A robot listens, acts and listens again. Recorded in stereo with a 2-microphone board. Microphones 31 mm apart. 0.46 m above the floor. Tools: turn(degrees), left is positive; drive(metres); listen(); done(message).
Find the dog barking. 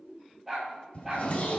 turn(degrees=-30)
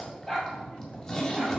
turn(degrees=15)
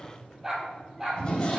turn(degrees=-10)
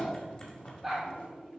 done("Facing the dog barking.")